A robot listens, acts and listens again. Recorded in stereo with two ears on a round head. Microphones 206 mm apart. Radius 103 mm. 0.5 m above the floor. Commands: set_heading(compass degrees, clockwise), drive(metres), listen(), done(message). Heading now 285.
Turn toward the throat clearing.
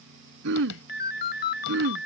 set_heading(340)
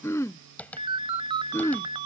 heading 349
set_heading(339)
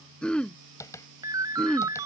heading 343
done("Found it: throat clearing, straight ahead.")